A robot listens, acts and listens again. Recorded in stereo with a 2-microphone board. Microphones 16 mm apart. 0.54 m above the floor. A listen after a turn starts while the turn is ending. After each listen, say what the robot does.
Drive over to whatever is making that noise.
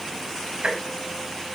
Turn 60° right.
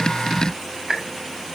Turn 30° right.
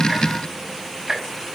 Turn 15° right.
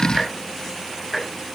Drive 1.0 m forward.
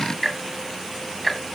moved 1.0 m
Turn 15° left.
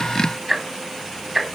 Drive 1.0 m forward.
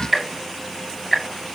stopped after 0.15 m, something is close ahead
I am next to the ticking.